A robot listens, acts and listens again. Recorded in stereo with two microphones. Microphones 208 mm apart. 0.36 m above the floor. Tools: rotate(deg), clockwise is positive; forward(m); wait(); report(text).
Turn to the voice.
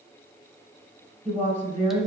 rotate(35)
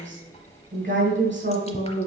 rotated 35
rotate(105)
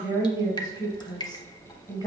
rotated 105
rotate(-20)
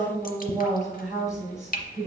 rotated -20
report("Facing the woman speaking, 2 to 4 m away.")